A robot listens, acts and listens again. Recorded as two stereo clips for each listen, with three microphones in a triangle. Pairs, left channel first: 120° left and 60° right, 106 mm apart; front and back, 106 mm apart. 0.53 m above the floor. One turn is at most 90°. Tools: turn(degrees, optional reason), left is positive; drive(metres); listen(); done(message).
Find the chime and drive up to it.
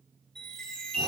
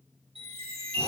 turn(degrees=-90, reason="The chime: 155° right.")
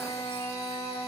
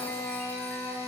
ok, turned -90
turn(degrees=-65, reason="Nothing new. It was at 65° right.")
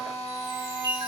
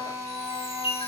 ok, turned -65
turn(degrees=-20, reason="The chime is now 20° right.")
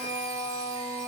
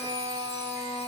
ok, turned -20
listen()
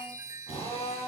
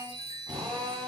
drive(metres=1.0)
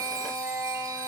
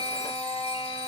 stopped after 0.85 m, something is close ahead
listen()
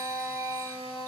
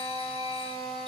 listen()
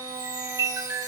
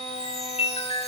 done("Blocked. The chime is further on, straight ahead.")